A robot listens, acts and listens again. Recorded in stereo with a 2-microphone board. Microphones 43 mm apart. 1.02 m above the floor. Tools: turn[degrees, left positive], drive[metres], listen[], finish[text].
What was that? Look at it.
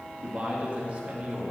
Thought: The man speaking: about 30° right or 150° right.
Action: turn[-30]
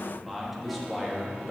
Action: finish[Found it: a man speaking, straight ahead, 1 to 2 m away.]